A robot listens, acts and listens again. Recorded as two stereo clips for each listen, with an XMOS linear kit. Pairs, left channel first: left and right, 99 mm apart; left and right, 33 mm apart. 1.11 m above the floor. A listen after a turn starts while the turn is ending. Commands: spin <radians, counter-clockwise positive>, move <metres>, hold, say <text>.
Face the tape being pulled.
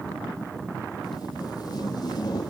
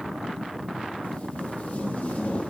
spin 0.79
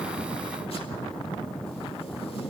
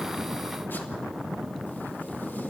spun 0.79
spin 1.48
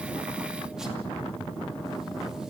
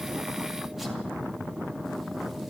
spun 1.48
hold
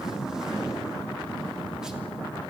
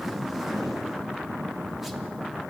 say Found it: tape being pulled, straight ahead, 2 to 4 m away.